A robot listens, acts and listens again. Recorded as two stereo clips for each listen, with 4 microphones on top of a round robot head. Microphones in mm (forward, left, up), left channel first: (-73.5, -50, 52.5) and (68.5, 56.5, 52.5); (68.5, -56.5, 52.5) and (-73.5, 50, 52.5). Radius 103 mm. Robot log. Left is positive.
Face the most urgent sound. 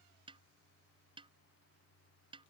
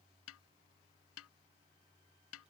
cmd idle
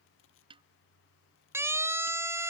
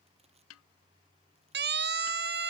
note: The siren: 115° left.
cmd yaw +115
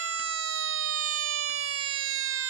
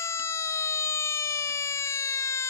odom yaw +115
note: The siren is now 40° left.
cmd yaw +40
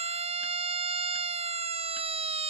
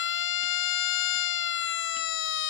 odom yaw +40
note: The siren is now 20° right.
cmd yaw -20
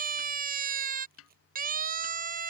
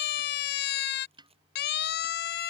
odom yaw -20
end: Facing the siren.